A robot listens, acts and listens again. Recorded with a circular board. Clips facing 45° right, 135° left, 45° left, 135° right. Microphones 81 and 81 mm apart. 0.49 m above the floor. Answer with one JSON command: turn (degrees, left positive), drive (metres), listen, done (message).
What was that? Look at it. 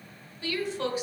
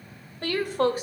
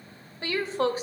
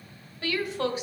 {"turn": 95}
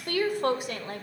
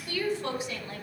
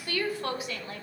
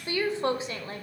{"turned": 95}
{"turn": -80}
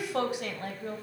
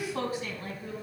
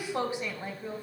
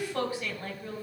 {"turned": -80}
{"turn": -30}
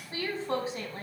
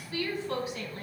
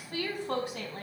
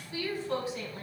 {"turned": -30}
{"turn": 10}
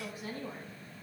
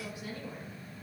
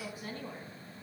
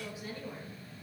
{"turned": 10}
{"done": "Facing the woman speaking, 2 to 4 m away."}